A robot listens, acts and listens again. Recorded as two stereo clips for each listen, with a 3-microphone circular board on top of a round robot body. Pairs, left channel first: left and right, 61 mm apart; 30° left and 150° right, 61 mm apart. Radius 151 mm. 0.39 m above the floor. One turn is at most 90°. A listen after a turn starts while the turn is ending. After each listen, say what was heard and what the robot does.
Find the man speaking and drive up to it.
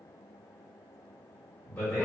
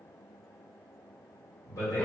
The man speaking: 10° left. Turn 10° left.
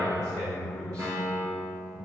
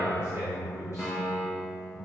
Drive 1.0 m forward.
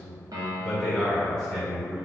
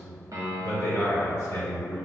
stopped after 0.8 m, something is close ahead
The man speaking is now 10° left. Turn 10° left.
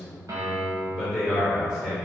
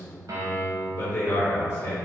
I am next to the man speaking.